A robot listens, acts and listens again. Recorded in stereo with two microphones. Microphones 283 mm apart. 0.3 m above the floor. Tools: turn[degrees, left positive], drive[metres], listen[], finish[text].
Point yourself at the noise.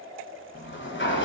Thought: The sliding door: about 40° left or 140° left.
Action: turn[40]
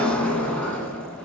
Action: finish[Facing the sliding door.]